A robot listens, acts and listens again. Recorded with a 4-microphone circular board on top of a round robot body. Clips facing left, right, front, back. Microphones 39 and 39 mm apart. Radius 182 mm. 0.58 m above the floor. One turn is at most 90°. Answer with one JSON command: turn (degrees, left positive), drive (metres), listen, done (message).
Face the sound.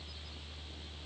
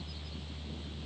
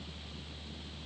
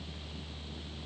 {"listen": true}
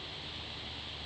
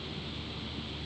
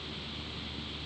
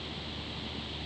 {"listen": true}
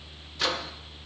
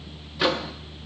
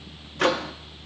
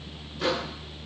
{"turn": -20}
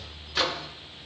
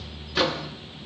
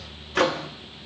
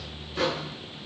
{"done": "Found it: a microwave, straight ahead."}